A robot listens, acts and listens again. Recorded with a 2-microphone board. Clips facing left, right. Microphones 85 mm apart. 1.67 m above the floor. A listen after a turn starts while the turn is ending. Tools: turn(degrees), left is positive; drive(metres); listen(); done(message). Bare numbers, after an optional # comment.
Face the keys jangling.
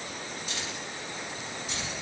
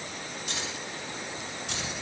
turn(-90)
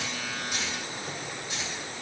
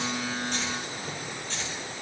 # So it is at 10° left.
turn(10)
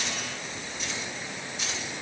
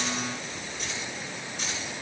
done("Found it: keys jangling, straight ahead.")